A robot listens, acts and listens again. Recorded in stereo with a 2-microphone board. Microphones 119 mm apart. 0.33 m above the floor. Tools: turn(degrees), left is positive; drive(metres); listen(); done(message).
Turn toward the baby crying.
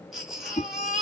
turn(degrees=-30)
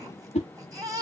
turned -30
turn(degrees=-150)
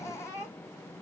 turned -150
turn(degrees=25)
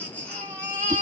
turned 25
turn(degrees=15)
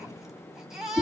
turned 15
done("Found it: a baby crying, straight ahead.")